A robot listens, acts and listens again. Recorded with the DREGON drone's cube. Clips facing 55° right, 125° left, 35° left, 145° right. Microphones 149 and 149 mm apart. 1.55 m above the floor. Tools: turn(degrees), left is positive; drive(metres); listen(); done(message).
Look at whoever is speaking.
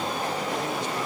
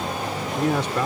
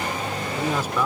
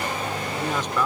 turn(degrees=115)
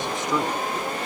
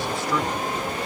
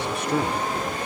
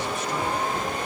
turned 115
turn(degrees=15)
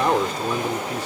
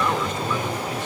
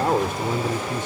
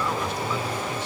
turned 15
done("Found it: a man speaking, straight ahead.")